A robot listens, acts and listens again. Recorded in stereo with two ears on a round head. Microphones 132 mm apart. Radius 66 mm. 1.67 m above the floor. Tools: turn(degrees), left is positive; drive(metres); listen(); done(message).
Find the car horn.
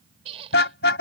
turn(degrees=90)
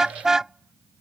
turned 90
done("Facing the car horn.")